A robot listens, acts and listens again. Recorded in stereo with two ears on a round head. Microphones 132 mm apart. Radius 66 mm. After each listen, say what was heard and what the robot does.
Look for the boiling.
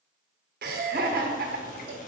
The boiling: about 55° left or 125° left. Turn 55° left.
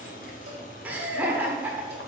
So it is at 60° left. Turn 60° left.
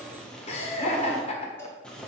Facing the boiling.